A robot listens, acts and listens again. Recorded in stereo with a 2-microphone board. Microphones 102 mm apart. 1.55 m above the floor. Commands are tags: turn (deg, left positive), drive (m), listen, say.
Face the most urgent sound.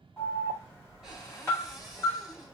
<turn deg="30"/>
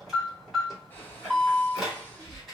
<say>Facing the alarm, 2 to 4 m away.</say>